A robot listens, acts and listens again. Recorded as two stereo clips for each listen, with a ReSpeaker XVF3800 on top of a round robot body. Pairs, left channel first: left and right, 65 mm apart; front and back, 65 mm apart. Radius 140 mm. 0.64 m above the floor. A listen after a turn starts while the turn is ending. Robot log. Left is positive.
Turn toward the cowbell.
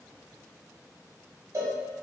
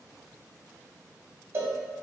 note: The cowbell: 125° right.
cmd yaw -125
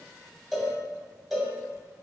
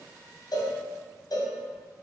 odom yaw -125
end: Found it: a cowbell, straight ahead, under 1 m away.